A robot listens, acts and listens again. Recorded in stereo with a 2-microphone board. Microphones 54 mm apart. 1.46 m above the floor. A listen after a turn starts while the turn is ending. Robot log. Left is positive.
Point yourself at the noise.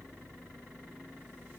cmd idle
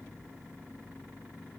cmd idle
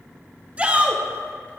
note: The shout: about 25° right or 155° right.
cmd yaw -25
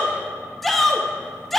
end: Facing the shout.